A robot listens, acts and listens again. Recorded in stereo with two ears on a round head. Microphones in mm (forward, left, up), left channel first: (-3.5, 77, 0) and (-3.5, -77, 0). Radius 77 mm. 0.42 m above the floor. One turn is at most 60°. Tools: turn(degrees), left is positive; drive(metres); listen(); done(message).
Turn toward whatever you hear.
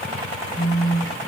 turn(degrees=60)
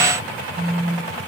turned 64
done("Facing the phone buzzing, 2 to 4 m away.")